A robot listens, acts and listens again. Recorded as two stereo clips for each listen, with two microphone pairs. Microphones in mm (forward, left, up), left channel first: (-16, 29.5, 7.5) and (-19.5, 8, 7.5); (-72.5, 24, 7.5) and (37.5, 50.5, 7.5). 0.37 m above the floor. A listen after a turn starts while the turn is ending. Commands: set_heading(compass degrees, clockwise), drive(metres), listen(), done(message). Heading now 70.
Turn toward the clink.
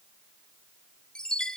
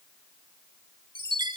listen()
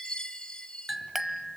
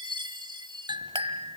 set_heading(90)
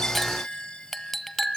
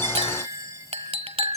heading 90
done("Facing the clink.")